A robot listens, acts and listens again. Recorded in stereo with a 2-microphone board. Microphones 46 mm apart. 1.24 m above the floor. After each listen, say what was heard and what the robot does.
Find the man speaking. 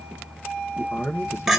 The man speaking: about 60° left or 120° left. Turn 60° left.
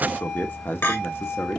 So it is at 60° left. Turn 60° left.
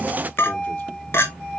Keep listening.
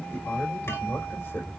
Keep listening.
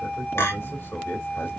The man speaking is now 40° left. Turn 40° left.
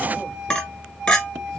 Keep listening.
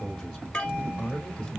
Found it: a man speaking, straight ahead.